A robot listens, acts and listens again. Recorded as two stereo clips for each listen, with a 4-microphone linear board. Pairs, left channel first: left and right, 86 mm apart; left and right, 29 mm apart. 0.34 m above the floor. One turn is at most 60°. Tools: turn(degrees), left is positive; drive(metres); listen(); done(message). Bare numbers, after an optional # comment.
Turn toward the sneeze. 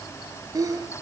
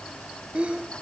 # The sneeze: about 40° right or 140° right.
turn(-40)
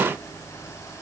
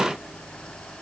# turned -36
listen()
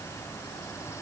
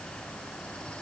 done("I heard a sneeze, but can't make it out now. It was about 5° right or 105° right.")